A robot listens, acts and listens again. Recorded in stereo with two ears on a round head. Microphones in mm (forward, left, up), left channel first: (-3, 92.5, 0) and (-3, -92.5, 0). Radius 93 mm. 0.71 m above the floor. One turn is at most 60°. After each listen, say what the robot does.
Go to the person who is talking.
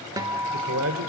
Turn 60° right.
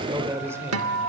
Turn 15° right.
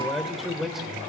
Drive 1.0 m forward.
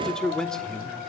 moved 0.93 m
Drive 1.0 m forward.
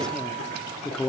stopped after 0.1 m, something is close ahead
Arrived at the man speaking, straight ahead.